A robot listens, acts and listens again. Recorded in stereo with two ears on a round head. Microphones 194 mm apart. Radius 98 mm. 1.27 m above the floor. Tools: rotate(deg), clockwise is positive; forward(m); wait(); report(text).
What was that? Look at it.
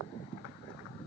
wait()
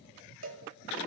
rotate(60)
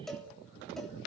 report("Found it: a cowbell, straight ahead.")